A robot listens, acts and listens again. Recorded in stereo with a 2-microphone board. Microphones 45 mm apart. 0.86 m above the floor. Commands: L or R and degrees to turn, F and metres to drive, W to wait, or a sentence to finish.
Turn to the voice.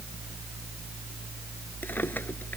W
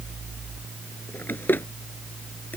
W
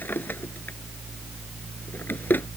I can't make out anyone speaking to turn to.